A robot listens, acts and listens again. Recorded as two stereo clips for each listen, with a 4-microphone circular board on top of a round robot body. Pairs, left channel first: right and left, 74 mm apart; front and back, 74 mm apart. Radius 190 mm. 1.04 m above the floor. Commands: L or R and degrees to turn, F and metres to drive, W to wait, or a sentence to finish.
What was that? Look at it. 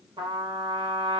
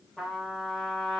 L85
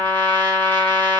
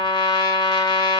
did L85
R25
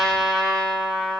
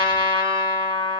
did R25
Facing the trumpet.